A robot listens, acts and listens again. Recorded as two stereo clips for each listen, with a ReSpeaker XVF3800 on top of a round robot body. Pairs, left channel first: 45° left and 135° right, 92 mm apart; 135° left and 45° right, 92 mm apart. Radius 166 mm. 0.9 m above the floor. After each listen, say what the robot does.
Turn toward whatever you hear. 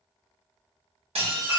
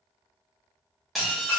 Turn 135° right.
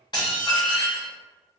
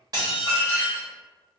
Found it: dishes clattering, straight ahead.